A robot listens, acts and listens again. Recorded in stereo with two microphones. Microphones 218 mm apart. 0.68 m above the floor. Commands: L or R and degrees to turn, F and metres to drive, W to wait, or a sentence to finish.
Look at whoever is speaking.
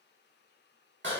W
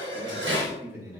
R30
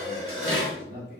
R135
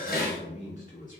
L40
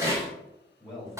Found it: a man speaking, straight ahead.